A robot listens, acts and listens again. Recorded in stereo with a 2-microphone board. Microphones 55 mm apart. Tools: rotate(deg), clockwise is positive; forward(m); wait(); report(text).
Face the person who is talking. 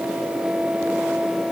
wait()
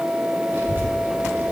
rotate(40)
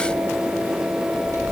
rotate(95)
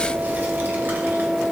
rotate(40)
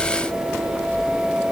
report("Found it: a child speaking, straight ahead.")